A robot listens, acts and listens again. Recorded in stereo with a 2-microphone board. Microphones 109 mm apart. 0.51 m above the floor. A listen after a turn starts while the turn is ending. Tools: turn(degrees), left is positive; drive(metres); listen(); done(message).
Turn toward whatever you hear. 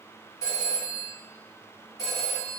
turn(degrees=30)
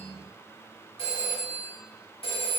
turn(degrees=120)
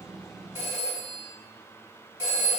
turn(degrees=-25)
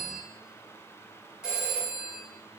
done("Found it: a phone ringing, straight ahead, 1 to 2 m away.")